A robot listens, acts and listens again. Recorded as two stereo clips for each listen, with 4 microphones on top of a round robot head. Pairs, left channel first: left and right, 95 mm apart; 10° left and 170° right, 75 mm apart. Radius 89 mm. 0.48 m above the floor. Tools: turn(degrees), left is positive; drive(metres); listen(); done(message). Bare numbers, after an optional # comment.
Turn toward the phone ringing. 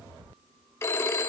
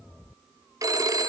# The phone ringing: 150° left.
turn(150)
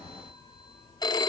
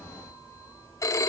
# The phone ringing is now 45° left.
turn(45)
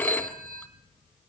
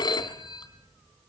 # The phone ringing is now 15° left.
turn(15)
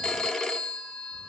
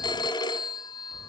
done("Found it: a phone ringing, straight ahead.")